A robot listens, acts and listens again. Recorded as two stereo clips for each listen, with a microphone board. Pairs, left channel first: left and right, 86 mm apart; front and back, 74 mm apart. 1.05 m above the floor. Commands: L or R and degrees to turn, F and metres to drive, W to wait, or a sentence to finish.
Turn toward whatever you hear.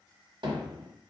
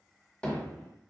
R80
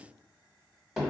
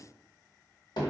Facing the hammering.